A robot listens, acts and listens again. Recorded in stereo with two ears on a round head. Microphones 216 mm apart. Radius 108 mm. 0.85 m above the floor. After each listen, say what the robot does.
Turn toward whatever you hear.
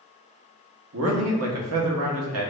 Turn 65° right.
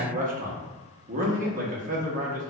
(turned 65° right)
Turn 40° right.
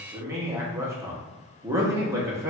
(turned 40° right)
Turn 15° right.
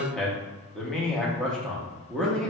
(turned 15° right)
Facing the man speaking.